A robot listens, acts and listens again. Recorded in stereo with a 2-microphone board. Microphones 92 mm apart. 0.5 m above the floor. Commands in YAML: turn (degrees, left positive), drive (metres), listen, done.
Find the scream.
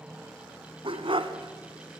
listen: true
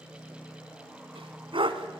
listen: true
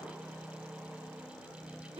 done: "I can't make out a scream to turn to."